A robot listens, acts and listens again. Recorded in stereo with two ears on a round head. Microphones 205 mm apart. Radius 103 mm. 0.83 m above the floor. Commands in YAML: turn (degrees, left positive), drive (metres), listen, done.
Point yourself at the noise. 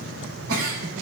turn: -70
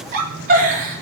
turn: -40
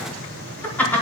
turn: 10
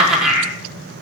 done: "Found it: a giggle, straight ahead, over 4 m away."